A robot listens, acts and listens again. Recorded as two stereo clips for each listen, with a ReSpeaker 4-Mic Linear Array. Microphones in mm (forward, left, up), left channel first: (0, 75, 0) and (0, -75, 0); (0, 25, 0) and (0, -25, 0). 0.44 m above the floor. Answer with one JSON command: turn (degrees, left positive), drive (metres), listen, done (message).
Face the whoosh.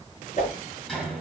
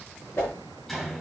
{"turn": 50}
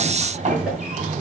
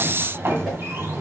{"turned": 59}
{"listen": true}
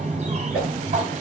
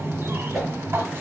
{"done": "Facing the whoosh, over 4 m away."}